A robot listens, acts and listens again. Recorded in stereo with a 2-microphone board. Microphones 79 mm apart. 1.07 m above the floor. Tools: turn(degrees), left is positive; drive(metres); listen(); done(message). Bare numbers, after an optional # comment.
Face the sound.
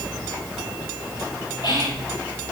# The whispering: about 70° left or 110° left.
turn(70)
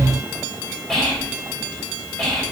done("Found it: whispering, straight ahead.")